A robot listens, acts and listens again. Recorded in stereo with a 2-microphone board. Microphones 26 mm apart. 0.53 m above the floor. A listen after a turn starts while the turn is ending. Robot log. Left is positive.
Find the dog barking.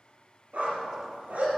cmd yaw -90
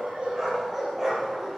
note: So it is at 15° right.
cmd yaw -15
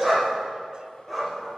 end: Facing the dog barking.